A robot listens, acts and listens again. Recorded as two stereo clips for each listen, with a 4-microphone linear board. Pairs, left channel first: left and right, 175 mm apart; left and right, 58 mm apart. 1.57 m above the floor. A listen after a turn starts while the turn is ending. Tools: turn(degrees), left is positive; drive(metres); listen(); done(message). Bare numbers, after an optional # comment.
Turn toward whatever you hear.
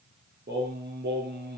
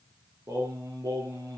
# The singing: about 70° right or 110° right.
turn(-70)
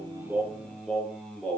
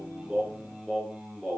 done("Facing the singing, over 4 m away.")